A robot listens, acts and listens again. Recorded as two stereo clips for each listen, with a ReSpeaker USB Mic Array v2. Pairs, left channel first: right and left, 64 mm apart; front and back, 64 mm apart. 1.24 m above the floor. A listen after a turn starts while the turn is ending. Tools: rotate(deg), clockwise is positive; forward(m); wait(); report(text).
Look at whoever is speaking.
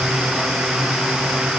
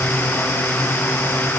wait()
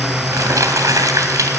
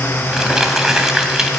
wait()
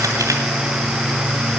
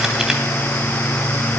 report("I can't make out anyone speaking to turn to.")